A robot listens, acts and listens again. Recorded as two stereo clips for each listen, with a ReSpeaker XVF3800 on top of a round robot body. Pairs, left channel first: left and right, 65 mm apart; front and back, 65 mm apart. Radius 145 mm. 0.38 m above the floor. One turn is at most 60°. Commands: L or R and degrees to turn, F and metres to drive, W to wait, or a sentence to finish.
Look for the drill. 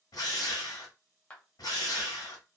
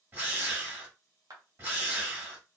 L60
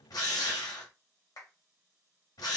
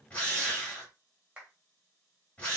L60
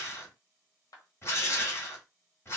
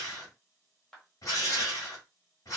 L40
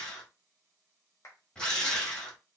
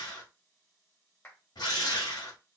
L10
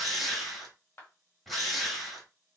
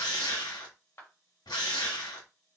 Found it: a drill, straight ahead, 1 to 2 m away.